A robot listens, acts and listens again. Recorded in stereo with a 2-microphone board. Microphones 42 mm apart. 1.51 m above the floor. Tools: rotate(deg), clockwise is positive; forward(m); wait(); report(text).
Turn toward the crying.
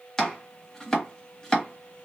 wait()
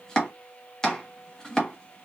wait()
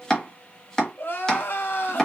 rotate(-65)
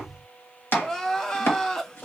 rotate(-15)
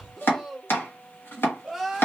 report("Found it: crying, straight ahead.")